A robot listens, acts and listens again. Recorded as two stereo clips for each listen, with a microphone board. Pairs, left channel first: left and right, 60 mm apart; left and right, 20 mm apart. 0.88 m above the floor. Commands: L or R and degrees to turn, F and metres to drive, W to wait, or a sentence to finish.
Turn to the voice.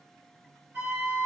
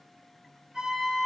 W
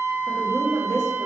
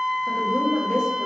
R60
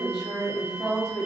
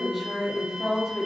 R10
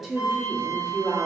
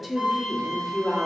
Facing the woman speaking.